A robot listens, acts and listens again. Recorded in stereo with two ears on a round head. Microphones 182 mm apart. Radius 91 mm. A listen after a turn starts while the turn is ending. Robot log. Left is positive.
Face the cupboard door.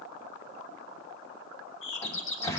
cmd yaw +30
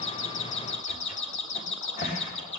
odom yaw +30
note: So it is at 135° left.
cmd yaw +135
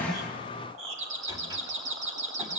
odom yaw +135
cmd idle
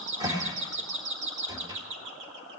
note: The cupboard door is now 20° right.
cmd yaw -20
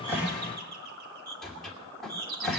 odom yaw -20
end: Facing the cupboard door, 2 to 4 m away.